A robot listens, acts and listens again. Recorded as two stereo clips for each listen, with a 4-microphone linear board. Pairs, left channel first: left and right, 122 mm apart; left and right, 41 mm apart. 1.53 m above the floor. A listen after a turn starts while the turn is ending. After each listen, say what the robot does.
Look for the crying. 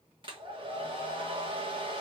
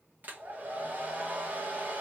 Keep listening.
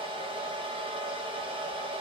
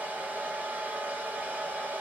Keep listening.
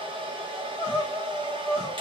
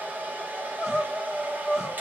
Turn 30° right.
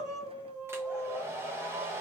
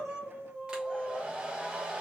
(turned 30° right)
Turn 15° left.
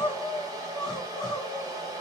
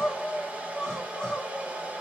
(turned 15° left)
Found it: crying, straight ahead.